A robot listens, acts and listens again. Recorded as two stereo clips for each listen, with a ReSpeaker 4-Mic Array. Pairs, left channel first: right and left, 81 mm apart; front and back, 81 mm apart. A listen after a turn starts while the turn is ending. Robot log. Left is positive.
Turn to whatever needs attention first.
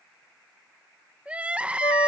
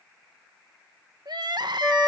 note: The crying: 165° left.
cmd yaw +165
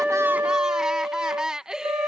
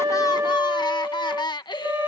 note: The crying is now 10° left.
cmd yaw +10
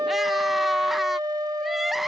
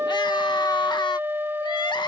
end: Facing the crying.